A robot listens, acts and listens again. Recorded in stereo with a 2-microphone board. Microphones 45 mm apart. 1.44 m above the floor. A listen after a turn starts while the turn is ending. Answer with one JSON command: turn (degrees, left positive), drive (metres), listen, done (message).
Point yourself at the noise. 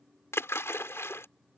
{"turn": 70}
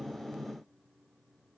{"listen": true}
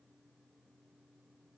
{"done": "I heard a splash, but can't make it out now. It was about straight ahead or 40° left."}